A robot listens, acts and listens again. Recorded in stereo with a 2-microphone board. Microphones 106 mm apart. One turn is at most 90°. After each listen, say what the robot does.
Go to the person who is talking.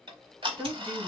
Turn 15° right.
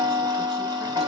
Keep listening.
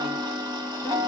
Keep listening.
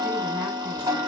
I heard a woman speaking, but can't make it out now. It was about straight ahead or 150° right. I did not reach it.